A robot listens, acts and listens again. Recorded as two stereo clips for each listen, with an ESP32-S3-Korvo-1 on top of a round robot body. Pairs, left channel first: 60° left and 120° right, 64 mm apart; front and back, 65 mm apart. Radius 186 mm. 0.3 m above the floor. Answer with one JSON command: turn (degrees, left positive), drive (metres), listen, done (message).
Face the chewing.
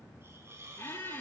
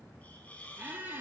{"listen": true}
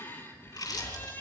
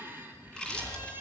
{"turn": 80}
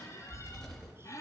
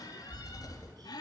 {"turn": -25}
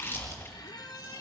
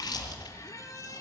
{"done": "Found it: chewing, straight ahead."}